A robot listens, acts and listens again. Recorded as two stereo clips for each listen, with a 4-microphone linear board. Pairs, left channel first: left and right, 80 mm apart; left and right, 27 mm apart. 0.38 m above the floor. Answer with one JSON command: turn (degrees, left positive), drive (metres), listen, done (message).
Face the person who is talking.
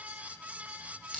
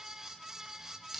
{"listen": true}
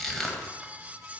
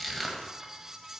{"listen": true}
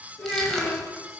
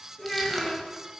{"turn": 40}
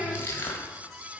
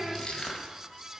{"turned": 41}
{"done": "Facing the child speaking, 2 to 4 m away."}